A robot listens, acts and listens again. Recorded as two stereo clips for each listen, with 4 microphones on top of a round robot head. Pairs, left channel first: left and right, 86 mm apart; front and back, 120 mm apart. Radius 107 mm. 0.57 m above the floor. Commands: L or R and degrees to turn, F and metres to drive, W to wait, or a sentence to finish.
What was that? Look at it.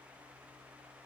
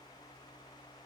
W
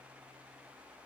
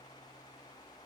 W
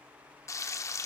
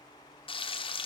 L40
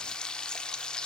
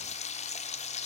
L10
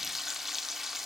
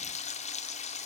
Found it: frying, straight ahead, 1 to 2 m away.